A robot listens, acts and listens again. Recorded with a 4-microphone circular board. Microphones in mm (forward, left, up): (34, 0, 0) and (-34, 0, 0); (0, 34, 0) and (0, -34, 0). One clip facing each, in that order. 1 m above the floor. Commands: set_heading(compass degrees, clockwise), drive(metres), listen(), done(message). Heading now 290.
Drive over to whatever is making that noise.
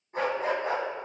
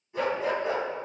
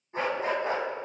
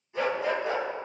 set_heading(250)
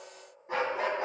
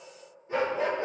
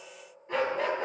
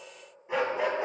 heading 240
set_heading(250)
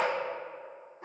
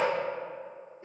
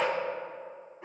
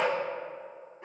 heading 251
drive(1.0)
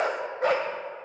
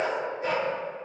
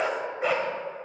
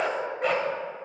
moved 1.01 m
drive(1.0)
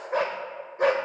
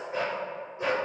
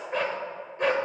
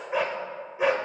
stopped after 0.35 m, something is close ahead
done("Arrived at the dog barking, straight ahead.")